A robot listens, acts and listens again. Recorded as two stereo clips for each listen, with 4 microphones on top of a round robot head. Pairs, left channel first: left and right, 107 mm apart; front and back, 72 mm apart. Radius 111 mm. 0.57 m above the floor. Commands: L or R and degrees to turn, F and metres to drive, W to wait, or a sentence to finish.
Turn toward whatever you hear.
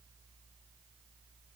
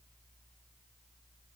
W
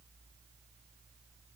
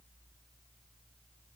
W
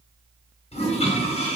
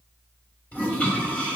L70
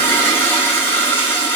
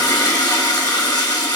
L20
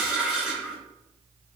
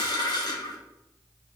Facing the toilet flushing, 1 to 2 m away.